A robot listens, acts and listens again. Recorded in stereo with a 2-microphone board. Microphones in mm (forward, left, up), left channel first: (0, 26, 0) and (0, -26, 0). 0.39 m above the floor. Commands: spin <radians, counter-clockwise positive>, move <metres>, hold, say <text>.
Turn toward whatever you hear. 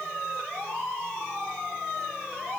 hold
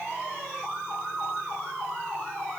hold
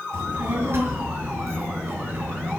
spin -0.79
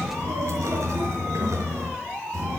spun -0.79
spin -1.75
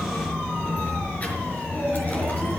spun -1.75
spin 0.52
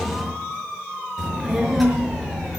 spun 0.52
say Found it: a child speaking, straight ahead, over 4 m away.